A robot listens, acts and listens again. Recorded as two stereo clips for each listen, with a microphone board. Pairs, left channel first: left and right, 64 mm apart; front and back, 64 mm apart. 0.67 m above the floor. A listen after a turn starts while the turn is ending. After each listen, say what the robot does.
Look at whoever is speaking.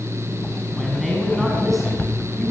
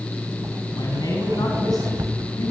Facing the man speaking, over 4 m away.